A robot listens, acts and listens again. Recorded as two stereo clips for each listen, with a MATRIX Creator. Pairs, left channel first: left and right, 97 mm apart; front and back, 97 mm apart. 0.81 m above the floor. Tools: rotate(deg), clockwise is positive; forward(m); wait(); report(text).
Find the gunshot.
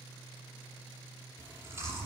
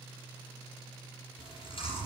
wait()
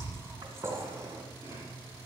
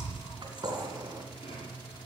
rotate(135)
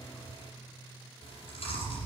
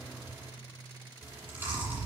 report("I heard a gunshot from this way, but can't make it out now.")